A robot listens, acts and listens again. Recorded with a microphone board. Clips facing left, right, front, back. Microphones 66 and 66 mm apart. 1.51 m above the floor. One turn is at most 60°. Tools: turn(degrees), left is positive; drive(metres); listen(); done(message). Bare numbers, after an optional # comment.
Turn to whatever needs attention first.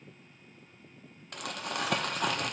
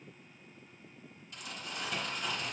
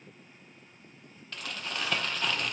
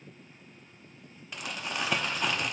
listen()
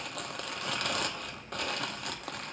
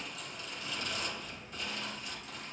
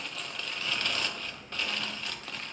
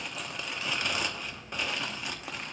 listen()
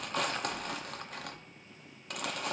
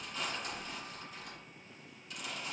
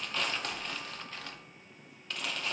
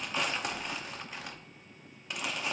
done("I can't make out anything urgent, only crumpling.")